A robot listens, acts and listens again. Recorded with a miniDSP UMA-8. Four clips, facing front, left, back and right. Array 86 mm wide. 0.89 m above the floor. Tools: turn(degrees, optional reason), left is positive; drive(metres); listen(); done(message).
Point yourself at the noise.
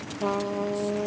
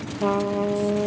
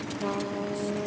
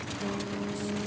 turn(degrees=75, reason="The trumpet: 75° left.")
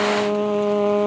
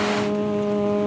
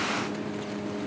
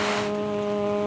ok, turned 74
done("Found it: a trumpet, straight ahead.")